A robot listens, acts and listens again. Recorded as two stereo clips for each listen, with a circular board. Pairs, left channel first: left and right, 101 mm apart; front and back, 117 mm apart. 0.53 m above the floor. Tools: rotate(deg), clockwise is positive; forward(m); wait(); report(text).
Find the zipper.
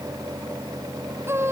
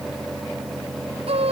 wait()
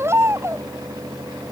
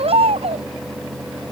wait()
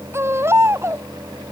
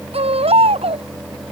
report("I can't make out a zipper to turn to.")